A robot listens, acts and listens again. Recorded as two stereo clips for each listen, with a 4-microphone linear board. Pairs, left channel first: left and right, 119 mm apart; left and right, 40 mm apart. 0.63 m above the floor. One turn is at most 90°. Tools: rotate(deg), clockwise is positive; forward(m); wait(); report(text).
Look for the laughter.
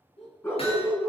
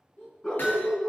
rotate(-65)
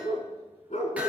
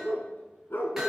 wait()
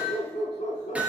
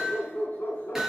wait()
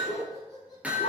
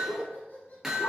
rotate(-35)
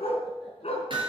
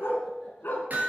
wait()
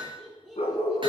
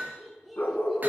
report("Facing the laughter, over 4 m away.")